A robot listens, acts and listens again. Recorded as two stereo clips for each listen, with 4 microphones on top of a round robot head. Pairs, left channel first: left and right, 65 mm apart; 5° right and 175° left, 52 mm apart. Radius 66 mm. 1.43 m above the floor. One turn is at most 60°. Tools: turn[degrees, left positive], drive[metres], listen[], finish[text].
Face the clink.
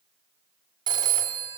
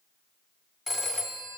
Action: listen[]
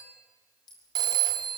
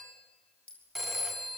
Thought: The clink: 60° left.
Action: turn[60]
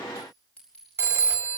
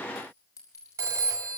Thought: The clink is now 15° left.
Action: turn[15]
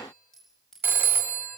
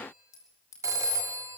Thought: The clink is now 10° left.
Action: turn[10]
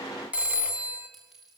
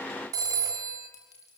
Action: finish[Facing the clink.]